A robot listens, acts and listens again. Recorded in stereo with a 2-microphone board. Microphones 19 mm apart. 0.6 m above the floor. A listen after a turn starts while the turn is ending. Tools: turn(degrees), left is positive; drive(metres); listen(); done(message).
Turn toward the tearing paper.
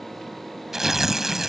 turn(degrees=-25)
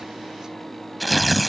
done("Facing the tearing paper.")